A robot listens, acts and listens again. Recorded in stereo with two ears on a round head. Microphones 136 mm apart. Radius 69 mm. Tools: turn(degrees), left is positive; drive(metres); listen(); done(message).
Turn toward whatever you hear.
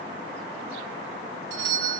turn(degrees=-75)
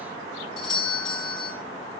done("Facing the doorbell.")